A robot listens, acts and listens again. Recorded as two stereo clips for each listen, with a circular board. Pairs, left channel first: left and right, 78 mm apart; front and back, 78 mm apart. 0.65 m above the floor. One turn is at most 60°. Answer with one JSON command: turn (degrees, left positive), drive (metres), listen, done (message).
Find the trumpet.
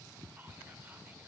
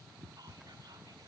{"listen": true}
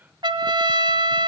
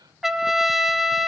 {"turn": -60}
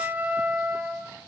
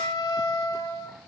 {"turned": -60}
{"turn": -25}
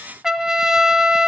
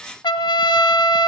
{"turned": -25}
{"done": "Facing the trumpet, 1 to 2 m away."}